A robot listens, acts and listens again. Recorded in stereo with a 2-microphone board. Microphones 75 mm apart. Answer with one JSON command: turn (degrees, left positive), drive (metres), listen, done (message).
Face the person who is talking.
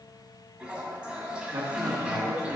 {"turn": -50}
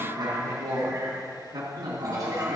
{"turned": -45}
{"turn": -85}
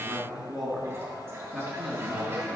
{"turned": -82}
{"done": "Found it: a man speaking, straight ahead, 2 to 4 m away."}